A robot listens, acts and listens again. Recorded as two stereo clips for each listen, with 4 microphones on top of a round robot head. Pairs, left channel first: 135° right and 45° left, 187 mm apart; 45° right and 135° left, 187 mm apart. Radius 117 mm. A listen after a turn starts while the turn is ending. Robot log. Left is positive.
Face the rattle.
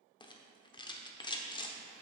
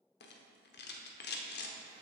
note: The rattle: 70° right.
cmd yaw -70
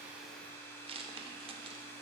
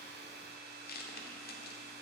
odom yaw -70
note: The rattle is now 15° right.
cmd yaw -15
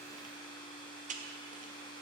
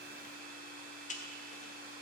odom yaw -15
end: Found it: a rattle, straight ahead.